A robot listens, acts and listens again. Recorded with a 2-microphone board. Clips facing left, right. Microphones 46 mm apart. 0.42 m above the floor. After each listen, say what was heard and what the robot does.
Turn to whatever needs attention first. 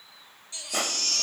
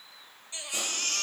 The baby crying: about 30° right or 150° right. Turn 30° right.
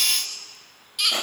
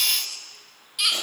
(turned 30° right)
Facing the baby crying, 1 to 2 m away.